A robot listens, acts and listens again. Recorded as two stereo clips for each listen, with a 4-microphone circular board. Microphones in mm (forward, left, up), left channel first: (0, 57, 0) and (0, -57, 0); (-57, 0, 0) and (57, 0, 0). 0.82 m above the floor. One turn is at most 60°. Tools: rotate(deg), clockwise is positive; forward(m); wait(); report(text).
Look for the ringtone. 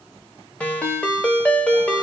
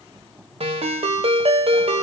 rotate(-15)
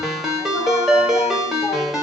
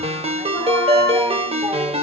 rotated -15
report("Found it: a ringtone, straight ahead, under 1 m away.")